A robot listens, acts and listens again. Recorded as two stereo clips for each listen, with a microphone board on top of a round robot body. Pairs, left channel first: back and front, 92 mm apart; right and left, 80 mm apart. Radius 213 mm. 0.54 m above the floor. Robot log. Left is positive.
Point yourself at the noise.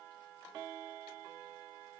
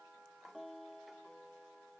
cmd idle
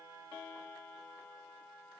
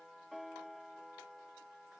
cmd idle
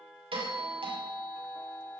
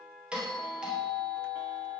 note: The doorbell: 10° left.
cmd yaw +10
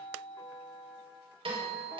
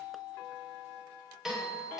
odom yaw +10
end: Found it: a doorbell, straight ahead, over 4 m away.